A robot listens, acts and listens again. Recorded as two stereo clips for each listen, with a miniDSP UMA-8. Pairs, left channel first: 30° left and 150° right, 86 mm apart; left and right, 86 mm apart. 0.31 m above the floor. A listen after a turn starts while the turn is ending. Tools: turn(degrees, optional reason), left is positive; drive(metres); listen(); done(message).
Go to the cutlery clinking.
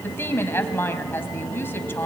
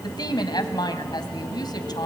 listen()
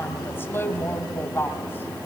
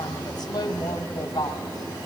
listen()
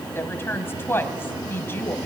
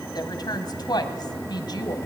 done("I can't make out cutlery clinking to turn to.")